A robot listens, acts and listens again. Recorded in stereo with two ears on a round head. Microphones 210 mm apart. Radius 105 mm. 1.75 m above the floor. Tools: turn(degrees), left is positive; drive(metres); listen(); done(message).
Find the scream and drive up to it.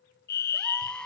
turn(degrees=30)
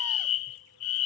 listen()
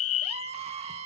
turn(degrees=-25)
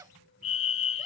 turn(degrees=-15)
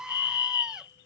drive(metres=1.0)
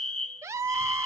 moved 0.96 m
turn(degrees=-15)
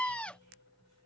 drive(metres=1.0)
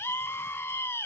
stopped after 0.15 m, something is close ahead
turn(degrees=10)
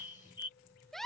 done("I am next to the scream.")